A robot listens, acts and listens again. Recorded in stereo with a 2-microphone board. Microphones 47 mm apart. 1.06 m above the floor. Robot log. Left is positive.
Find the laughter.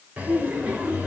note: The laughter: about 30° right or 150° right.
cmd yaw -30
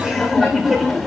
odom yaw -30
end: Facing the laughter.